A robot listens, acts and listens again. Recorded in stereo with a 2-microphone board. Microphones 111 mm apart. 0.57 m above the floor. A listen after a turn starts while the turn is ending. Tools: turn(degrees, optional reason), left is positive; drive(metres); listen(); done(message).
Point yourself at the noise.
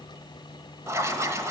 turn(degrees=-25, reason="The writing: about 25° right or 155° right.")
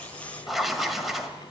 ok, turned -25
done("Facing the writing, 1 to 2 m away.")